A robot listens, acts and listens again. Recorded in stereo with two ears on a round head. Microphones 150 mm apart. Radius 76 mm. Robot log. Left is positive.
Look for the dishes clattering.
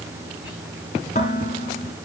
note: The dishes clattering: about 45° left or 135° left.
cmd yaw +45
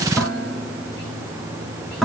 end: Facing the dishes clattering, 2 to 4 m away.